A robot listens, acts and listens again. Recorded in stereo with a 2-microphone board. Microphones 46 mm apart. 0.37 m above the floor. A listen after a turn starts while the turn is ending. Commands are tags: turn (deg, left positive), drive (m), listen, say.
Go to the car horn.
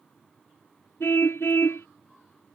<turn deg="75"/>
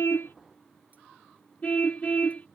<turn deg="35"/>
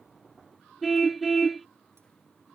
<drive m="1.0"/>
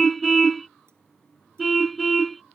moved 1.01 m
<drive m="1.0"/>
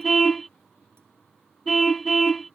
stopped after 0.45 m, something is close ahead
<say>I am next to the car horn.</say>